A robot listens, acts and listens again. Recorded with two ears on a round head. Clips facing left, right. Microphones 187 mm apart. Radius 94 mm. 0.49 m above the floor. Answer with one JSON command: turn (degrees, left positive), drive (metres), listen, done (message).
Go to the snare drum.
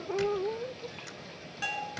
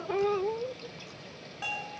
{"listen": true}
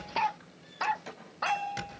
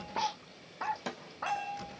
{"turn": -65}
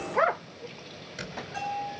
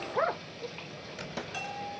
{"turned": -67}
{"listen": true}
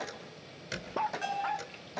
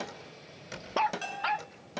{"turn": -45}
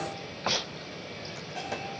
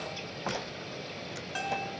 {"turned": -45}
{"listen": true}
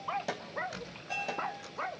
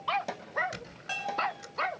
{"drive": 1.0}
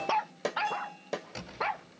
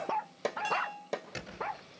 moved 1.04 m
{"drive": 1.0}
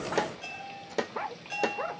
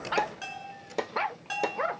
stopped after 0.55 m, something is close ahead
{"done": "Arrived at the snare drum, straight ahead."}